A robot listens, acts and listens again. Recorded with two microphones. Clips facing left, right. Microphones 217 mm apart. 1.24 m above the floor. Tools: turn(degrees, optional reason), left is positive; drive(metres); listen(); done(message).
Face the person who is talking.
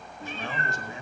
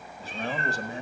turn(degrees=-35, reason="The man speaking: about 35° right or 145° right.")
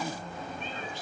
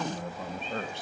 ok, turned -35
turn(degrees=-110, reason="So it is at 110° right.")
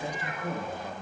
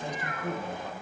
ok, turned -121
turn(degrees=10, reason="The man speaking is now 10° left.")
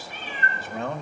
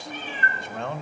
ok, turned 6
done("Facing the man speaking, 1 to 2 m away.")